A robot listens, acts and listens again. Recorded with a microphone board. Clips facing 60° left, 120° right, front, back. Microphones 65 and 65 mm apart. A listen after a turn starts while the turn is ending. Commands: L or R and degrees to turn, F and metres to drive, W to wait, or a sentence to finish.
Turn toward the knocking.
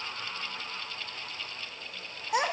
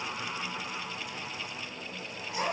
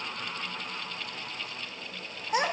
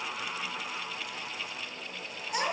W
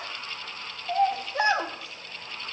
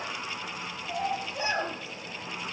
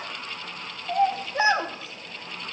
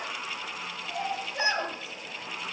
W
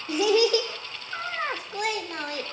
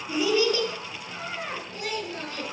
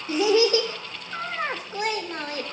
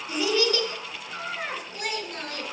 I can't make out knocking, only a child speaking.